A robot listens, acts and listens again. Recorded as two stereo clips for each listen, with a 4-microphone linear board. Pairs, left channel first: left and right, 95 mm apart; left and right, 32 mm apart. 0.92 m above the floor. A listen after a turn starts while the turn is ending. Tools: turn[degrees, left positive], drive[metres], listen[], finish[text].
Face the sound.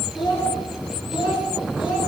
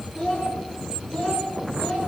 Thought: The child speaking: about 75° left or 105° left.
Action: turn[75]
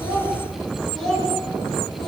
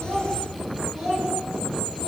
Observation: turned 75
Action: finish[Facing the child speaking, over 4 m away.]